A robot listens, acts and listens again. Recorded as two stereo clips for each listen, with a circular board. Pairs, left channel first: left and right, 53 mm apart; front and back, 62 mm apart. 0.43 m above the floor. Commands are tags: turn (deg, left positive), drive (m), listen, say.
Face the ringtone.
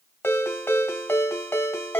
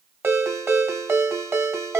<turn deg="135"/>
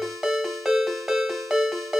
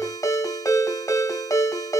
<say>Facing the ringtone.</say>